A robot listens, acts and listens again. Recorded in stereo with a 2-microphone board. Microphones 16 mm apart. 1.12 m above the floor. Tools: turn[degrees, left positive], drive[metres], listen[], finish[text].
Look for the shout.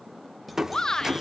Thought: The shout: about 45° left or 135° left.
Action: turn[45]
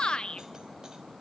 Thought: So it is at 90° left.
Action: turn[90]
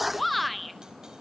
Action: finish[Facing the shout.]